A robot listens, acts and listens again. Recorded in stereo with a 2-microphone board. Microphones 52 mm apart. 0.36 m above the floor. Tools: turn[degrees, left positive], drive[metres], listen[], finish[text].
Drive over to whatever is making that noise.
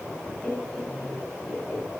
Thought: The laughter: about 25° left or 155° left.
Action: turn[25]
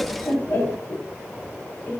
Thought: So it is at 130° left.
Action: turn[130]
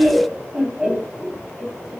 Thought: The laughter is now 20° right.
Action: turn[-20]
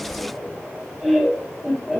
Action: drive[1.0]
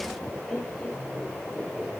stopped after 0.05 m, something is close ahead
Action: finish[Blocked. The laughter is further on, straight ahead.]